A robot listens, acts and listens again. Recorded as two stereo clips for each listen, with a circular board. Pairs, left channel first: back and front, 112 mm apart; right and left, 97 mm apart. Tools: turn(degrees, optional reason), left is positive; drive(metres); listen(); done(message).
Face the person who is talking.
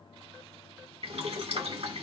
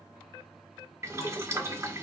listen()
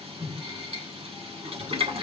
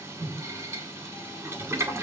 listen()
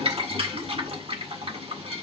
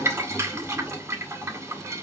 done("I can't make out anyone speaking to turn to.")